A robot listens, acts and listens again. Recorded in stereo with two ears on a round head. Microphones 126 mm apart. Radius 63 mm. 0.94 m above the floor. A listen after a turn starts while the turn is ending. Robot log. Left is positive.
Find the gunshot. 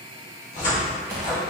note: The gunshot: about 25° right or 155° right.
cmd yaw -25
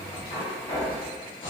cmd idle
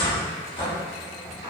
end: I heard a gunshot, but can't make it out now. It was about straight ahead or 130° right.